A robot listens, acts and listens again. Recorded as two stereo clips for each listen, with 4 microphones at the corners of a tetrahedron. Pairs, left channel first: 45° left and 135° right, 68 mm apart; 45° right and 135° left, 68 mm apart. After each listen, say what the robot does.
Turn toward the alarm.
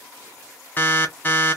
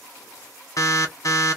Turn 20° right.
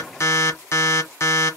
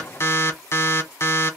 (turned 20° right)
Facing the alarm, under 1 m away.